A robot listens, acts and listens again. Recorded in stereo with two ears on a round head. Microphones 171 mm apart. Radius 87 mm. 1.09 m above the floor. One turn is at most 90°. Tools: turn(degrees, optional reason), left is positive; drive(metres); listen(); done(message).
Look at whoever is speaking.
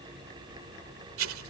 listen()
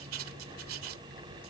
listen()
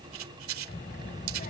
turn(degrees=40, reason="The child speaking: about 40° left or 140° left.")
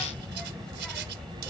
done("Found it: a child speaking, straight ahead.")